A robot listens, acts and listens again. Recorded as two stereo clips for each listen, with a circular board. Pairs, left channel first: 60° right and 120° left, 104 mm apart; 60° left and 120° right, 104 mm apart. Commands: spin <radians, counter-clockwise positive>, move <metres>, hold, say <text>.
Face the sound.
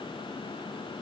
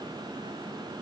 hold
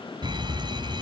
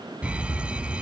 spin 2.79
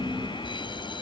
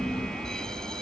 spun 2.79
spin -0.44
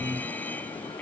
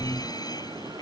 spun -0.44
spin 0.17
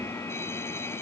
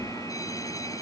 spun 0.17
say Facing the fire alarm.